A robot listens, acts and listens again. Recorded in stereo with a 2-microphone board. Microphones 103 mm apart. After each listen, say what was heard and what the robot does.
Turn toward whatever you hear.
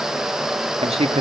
Turn 90° right.
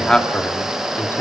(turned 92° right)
So it is at 25° left. Turn 25° left.
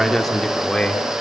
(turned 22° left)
The man speaking is now 10° left. Turn 10° left.
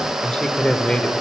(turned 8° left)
The man speaking is now 10° left. Turn 10° left.
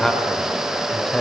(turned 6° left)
The man speaking is now 10° left. Turn 10° left.
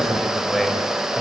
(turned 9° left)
Found it: a man speaking, straight ahead.